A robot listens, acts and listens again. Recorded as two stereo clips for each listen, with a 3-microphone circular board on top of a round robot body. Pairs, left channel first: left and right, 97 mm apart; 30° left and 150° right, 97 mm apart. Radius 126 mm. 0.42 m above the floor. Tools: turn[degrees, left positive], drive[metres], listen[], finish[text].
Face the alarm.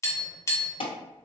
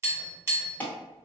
Thought: The alarm: 100° left.
Action: turn[100]
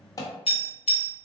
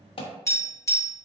Thought: The alarm is now 40° left.
Action: turn[40]
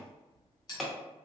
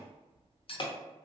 Action: finish[Found it: an alarm, straight ahead, under 1 m away.]